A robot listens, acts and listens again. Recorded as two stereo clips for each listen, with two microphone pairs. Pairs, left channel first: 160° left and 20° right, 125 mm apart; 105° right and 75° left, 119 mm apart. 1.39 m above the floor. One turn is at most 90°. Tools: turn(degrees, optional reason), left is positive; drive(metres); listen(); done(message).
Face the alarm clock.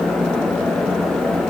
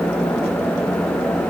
listen()
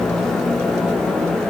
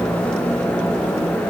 listen()
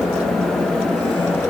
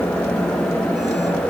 done("I can't make out an alarm clock.")